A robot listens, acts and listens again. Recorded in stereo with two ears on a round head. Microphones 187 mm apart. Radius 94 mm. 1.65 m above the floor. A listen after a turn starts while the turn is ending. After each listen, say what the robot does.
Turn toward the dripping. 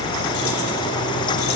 Keep listening.
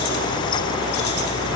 Keep listening.
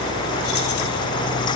I can't make out dripping.